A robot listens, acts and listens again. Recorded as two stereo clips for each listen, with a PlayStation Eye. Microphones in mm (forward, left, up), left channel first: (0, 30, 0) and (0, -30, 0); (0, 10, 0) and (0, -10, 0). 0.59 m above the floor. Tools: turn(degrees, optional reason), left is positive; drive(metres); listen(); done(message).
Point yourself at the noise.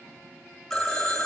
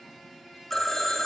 turn(degrees=30)
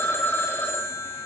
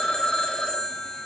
turn(degrees=145, reason="So it is at 145° left.")
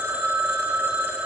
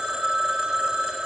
turn(degrees=-30, reason="The phone ringing is now 30° right.")
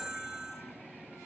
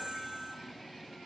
turn(degrees=-15, reason="The phone ringing is now 15° right.")
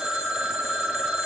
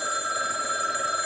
done("Facing the phone ringing, 1 to 2 m away.")